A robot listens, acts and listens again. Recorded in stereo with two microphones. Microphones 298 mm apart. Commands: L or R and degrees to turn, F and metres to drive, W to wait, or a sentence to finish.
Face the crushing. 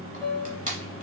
R25
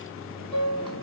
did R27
W
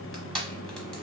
Facing the crushing, 1 to 2 m away.